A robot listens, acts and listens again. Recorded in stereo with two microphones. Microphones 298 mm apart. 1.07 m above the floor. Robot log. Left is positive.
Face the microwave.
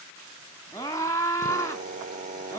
cmd idle
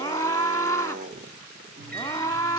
note: The microwave: about 30° right or 150° right.
cmd yaw -30
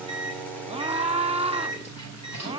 note: So it is at 120° right.
cmd yaw -120
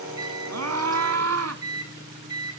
note: The microwave is now 15° right.
cmd yaw -15
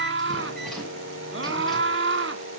cmd idle
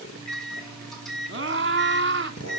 end: Found it: a microwave, straight ahead.